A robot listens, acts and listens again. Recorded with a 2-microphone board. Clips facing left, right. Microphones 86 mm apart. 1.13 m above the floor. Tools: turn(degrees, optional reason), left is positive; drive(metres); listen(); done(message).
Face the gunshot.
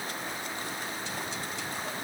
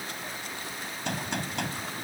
turn(degrees=-65, reason="The gunshot: about 65° right or 115° right.")
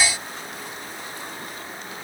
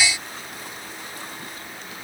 listen()
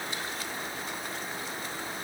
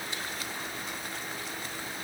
done("I heard a gunshot, but can't make it out now. It was about straight ahead or 50° right.")